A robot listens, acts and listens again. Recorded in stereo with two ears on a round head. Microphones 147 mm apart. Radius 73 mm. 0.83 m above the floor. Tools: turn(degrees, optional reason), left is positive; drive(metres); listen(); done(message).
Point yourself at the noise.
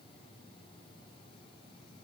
listen()
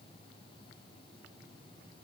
listen()
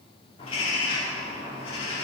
turn(degrees=35, reason="The bird: about 35° left or 145° left.")
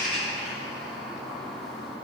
done("Found it: a bird, straight ahead, 2 to 4 m away.")